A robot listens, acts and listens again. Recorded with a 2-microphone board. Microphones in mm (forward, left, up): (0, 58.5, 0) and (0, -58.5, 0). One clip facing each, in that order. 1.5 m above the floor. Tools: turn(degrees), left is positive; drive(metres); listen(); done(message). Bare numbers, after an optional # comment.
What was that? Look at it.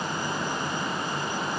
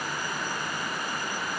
listen()
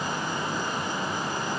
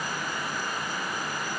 listen()
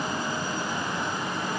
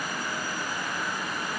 done("I can't make out anything.")